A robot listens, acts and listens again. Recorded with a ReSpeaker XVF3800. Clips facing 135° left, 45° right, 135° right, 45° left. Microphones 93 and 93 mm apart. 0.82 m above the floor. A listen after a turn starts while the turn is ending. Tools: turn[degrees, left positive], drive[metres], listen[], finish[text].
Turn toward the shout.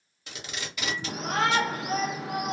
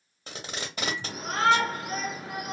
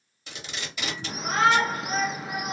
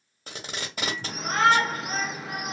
Thought: The shout: 135° left.
Action: turn[135]
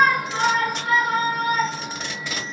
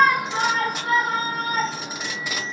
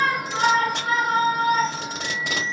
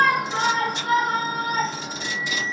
Action: finish[Facing the shout, under 1 m away.]